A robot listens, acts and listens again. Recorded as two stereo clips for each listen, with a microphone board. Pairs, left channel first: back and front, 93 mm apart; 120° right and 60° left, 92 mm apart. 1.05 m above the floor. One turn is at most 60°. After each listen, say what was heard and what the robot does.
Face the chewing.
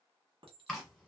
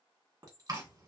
The chewing: 95° left. Turn 60° left.
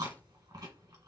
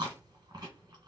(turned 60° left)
The chewing is now 35° left. Turn 35° left.
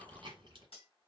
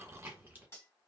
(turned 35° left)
Found it: chewing, straight ahead, 1 to 2 m away.